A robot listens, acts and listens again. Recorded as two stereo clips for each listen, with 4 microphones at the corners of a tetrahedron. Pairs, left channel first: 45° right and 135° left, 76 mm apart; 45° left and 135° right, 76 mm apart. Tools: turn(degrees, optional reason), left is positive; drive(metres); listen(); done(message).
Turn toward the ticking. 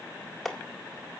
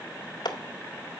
listen()
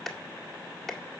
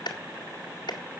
listen()
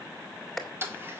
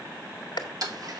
turn(degrees=-165, reason="The ticking: 165° right.")
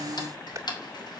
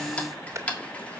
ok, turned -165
turn(degrees=-30, reason="The ticking is now 30° right.")
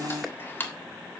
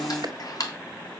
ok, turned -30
turn(degrees=15, reason="The ticking is now 15° left.")
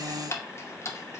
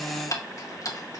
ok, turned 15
done("Facing the ticking, 1 to 2 m away.")